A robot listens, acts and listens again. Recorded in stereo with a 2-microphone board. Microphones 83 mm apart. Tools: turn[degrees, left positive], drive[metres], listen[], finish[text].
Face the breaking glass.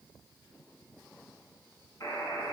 Action: listen[]
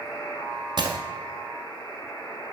Thought: The breaking glass: about 65° right or 115° right.
Action: turn[-65]
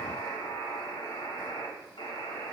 Action: listen[]
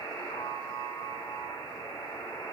Action: finish[I heard breaking glass, but can't make it out now. It was about straight ahead or 50° right.]